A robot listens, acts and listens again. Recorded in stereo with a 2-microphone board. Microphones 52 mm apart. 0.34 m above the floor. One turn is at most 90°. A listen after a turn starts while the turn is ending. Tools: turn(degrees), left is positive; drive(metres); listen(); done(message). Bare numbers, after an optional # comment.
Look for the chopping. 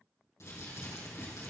listen()
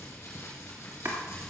# The chopping: about 55° right or 125° right.
turn(-55)
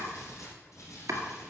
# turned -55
# So it is at 70° right.
turn(-70)
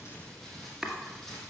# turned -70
# The chopping is now 10° right.
turn(-10)
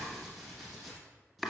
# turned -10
done("Found it: chopping, straight ahead.")